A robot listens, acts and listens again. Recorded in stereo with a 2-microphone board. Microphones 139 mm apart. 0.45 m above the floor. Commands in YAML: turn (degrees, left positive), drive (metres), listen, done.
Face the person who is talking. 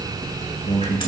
turn: 60
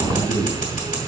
listen: true
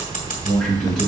done: "Found it: a man speaking, straight ahead."